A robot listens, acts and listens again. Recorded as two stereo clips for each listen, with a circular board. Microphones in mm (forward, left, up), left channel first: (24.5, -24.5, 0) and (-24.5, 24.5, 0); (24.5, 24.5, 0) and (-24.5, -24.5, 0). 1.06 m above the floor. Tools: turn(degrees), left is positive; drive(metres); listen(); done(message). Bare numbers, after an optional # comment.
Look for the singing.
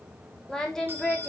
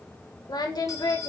# The singing: 35° left.
turn(35)
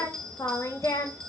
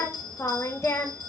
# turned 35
done("Found it: singing, straight ahead.")